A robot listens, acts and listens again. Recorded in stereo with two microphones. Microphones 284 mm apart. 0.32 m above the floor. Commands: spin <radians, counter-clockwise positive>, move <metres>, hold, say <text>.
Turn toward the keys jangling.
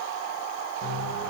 hold
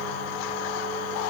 hold
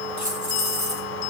spin -1.57
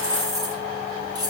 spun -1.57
spin -0.26
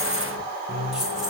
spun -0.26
say Facing the keys jangling, over 4 m away.